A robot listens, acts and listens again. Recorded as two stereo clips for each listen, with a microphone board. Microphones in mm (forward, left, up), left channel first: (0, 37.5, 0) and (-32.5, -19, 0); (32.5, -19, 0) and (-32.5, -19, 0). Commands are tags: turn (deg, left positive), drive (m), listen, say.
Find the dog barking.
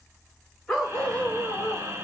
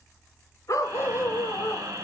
<turn deg="-25"/>
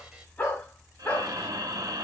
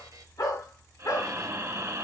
<say>Found it: a dog barking, straight ahead.</say>